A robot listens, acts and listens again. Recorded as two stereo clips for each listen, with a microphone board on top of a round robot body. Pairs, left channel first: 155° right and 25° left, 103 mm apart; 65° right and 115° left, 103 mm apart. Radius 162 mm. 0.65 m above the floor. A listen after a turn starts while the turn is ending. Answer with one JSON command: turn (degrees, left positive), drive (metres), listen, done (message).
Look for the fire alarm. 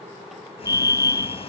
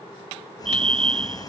{"turn": 145}
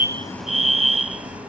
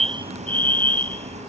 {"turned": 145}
{"turn": 10}
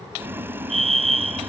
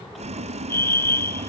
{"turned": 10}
{"done": "Found it: a fire alarm, straight ahead."}